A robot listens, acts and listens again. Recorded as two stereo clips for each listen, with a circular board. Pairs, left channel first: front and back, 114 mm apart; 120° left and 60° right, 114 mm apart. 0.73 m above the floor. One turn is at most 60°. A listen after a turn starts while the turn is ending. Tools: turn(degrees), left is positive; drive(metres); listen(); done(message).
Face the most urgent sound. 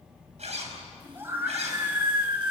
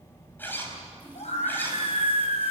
turn(degrees=60)
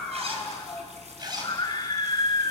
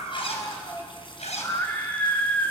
turn(degrees=50)
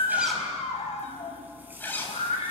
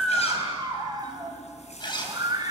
turn(degrees=-10)
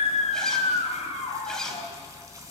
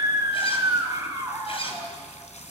done("Found it: a scream, straight ahead, over 4 m away.")